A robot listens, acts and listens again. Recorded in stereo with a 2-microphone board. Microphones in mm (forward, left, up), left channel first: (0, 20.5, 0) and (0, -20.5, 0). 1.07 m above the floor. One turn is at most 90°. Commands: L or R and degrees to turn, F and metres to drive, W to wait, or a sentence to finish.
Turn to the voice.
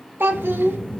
R65
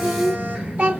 R45
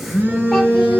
W
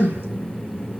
W
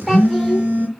Facing where the child speaking came from. I can't hear it now.